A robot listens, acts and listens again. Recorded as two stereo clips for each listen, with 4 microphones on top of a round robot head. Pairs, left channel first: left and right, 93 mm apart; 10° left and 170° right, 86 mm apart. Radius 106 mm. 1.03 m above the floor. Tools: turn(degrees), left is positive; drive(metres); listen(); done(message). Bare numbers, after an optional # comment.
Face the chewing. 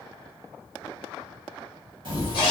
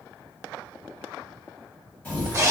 # The chewing: 65° right.
turn(-65)
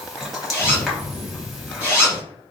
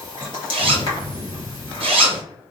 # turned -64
done("Facing the chewing.")